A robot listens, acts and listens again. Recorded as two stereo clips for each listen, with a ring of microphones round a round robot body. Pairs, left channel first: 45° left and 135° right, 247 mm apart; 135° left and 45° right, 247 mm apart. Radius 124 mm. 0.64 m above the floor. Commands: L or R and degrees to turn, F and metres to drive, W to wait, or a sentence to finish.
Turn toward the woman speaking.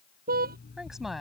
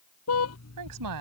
R45
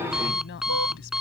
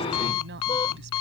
Found it: a woman speaking, straight ahead.